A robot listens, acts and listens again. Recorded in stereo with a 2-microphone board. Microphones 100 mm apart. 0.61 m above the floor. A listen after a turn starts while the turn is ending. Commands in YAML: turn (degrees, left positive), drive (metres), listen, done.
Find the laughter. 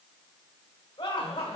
turn: 70
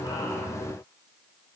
listen: true
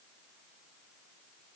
listen: true
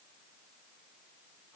done: "I heard laughter, but can't make it out now. It was about straight ahead or 40° left."